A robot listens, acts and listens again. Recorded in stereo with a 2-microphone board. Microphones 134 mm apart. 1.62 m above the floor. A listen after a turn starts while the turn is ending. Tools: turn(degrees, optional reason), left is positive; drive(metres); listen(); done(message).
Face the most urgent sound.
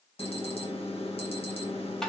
turn(degrees=45, reason="The alarm: about 45° left or 135° left.")
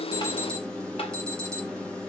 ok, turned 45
done("Facing the alarm.")